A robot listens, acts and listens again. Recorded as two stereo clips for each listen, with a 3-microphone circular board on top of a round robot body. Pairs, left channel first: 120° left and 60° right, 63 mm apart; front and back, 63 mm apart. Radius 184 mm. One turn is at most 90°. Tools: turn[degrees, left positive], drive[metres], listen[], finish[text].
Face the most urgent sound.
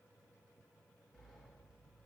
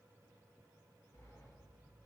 Action: listen[]
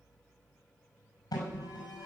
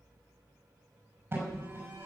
Thought: The alarm: 125° left.
Action: turn[90]
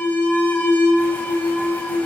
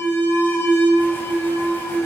Thought: The alarm is now 55° left.
Action: turn[55]
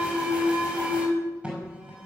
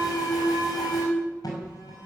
Thought: The alarm is now 15° left.
Action: turn[15]
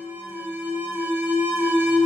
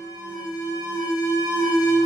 Action: finish[Found it: an alarm, straight ahead, over 4 m away.]